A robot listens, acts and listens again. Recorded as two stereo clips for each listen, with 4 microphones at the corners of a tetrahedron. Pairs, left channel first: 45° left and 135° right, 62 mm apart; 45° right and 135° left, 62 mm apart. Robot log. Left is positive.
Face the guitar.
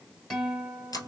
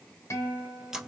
note: The guitar: 40° right.
cmd yaw -40
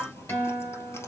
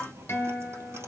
end: Facing the guitar.